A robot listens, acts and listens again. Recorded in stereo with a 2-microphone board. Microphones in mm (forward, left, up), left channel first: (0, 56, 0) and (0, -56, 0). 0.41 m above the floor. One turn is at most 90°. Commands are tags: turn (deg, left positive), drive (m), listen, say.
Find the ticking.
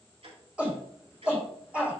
<turn deg="-70"/>
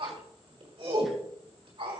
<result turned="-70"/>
<listen/>
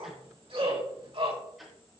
<say>Facing the ticking, 2 to 4 m away.</say>